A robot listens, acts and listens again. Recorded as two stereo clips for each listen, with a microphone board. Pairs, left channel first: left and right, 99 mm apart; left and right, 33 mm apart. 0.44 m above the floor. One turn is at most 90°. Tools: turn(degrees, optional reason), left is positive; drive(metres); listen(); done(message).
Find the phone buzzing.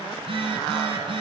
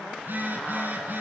turn(degrees=-70, reason="The phone buzzing: about 70° right or 110° right.")
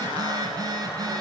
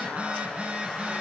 turn(degrees=-40, reason="So it is at 40° right.")
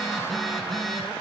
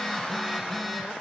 done("Found it: a phone buzzing, straight ahead.")